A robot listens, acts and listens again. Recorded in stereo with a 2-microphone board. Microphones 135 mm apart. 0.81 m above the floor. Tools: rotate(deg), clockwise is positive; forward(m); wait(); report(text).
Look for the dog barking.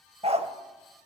rotate(55)
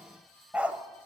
rotate(10)
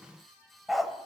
report("Found it: a dog barking, straight ahead, under 1 m away.")